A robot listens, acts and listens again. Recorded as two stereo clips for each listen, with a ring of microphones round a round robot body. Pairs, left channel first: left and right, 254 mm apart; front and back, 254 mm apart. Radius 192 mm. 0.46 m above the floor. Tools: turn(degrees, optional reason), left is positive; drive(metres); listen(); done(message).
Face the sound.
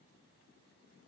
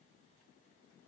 listen()
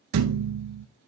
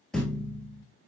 turn(degrees=-90, reason="The thud: 90° right.")
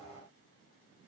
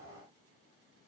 done("I heard a thud from this way, but can't make it out now.")